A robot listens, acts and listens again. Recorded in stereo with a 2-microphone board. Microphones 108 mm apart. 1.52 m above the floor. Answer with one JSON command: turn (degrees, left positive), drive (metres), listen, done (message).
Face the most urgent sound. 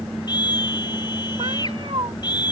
{"turn": 40}
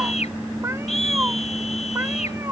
{"turn": 100}
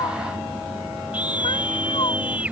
{"turn": -15}
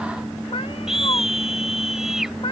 {"done": "Facing the scream."}